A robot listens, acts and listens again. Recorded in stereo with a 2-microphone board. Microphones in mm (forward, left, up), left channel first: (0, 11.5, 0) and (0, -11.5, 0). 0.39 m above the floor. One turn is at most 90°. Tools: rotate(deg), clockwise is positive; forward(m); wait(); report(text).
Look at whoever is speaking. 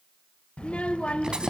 rotate(-60)
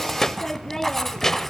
rotate(-20)
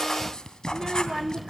report("Found it: a child speaking, straight ahead, under 1 m away.")